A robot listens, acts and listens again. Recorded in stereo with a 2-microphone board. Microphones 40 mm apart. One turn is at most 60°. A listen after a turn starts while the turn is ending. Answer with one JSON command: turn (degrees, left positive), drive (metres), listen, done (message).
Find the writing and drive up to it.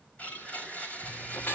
{"turn": 60}
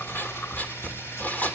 {"turn": 45}
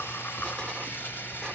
{"turn": 20}
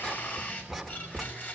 {"drive": 1.0}
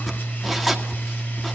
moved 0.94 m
{"drive": 1.0}
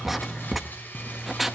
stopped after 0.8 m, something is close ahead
{"done": "I am next to the writing."}